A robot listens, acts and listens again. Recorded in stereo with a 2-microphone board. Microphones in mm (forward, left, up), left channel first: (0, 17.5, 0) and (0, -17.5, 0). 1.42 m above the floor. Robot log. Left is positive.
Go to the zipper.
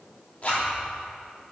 note: The zipper: about 45° left or 135° left.
cmd yaw +45
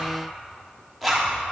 cmd fwd 1.0
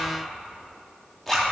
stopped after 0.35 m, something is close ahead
note: The zipper is now 10° left.
cmd yaw +10
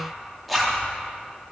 end: Something is in my way. I am facing the zipper but have not reached it.